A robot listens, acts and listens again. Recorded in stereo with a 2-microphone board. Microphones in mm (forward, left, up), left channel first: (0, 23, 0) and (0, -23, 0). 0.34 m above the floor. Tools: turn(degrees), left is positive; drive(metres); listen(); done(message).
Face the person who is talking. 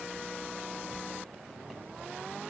listen()
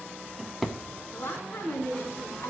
turn(degrees=70)
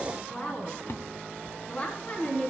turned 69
turn(degrees=30)
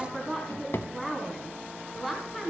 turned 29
done("Found it: a woman speaking, straight ahead.")